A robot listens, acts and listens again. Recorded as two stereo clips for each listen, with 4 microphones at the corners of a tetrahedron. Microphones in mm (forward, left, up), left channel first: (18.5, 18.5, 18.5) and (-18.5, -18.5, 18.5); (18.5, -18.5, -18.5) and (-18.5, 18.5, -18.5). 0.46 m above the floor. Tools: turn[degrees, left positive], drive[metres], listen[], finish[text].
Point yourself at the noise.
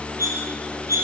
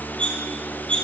Thought: The cutlery clinking: 115° right.
Action: turn[-115]
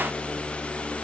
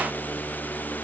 Action: listen[]
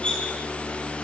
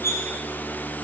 Thought: The cutlery clinking is now 25° right.
Action: turn[-25]
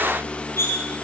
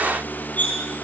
Thought: The cutlery clinking is now 10° left.
Action: turn[10]
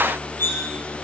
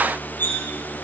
Action: finish[Found it: cutlery clinking, straight ahead.]